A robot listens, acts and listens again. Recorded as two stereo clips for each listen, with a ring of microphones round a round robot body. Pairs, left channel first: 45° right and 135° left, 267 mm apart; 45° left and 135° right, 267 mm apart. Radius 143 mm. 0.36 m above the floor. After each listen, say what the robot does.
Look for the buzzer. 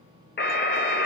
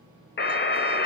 Found it: a buzzer, straight ahead, 1 to 2 m away.